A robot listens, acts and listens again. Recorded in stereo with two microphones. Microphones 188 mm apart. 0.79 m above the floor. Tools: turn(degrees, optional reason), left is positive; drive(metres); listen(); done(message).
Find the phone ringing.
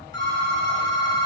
turn(degrees=20, reason="The phone ringing: about 20° left or 160° left.")
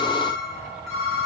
done("Facing the phone ringing.")